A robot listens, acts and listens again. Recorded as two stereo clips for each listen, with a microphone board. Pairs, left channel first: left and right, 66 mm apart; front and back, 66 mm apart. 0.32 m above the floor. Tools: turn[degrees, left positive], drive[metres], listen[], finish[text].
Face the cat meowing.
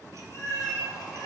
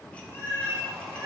Thought: The cat meowing: 65° left.
Action: turn[65]
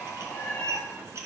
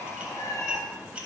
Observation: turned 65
Thought: The cat meowing is now 35° left.
Action: turn[35]
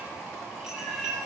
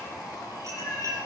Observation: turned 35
Action: finish[Facing the cat meowing.]